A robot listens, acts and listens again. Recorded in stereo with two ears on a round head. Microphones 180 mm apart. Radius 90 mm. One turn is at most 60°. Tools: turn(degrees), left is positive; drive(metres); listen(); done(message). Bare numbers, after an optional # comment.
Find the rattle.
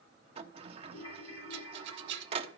# The rattle: about 60° right or 120° right.
turn(-60)
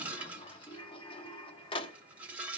# So it is at 10° right.
turn(-10)
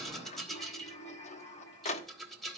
done("Facing the rattle, 1 to 2 m away.")